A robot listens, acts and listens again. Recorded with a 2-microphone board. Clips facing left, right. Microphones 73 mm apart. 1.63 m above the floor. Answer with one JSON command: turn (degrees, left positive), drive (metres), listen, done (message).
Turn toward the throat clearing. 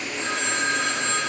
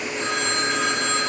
{"listen": true}
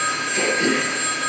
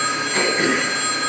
{"turn": -50}
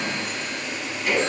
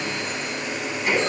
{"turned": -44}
{"turn": -15}
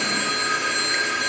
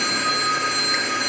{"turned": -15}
{"listen": true}
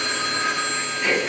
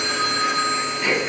{"done": "Found it: throat clearing, straight ahead, 2 to 4 m away."}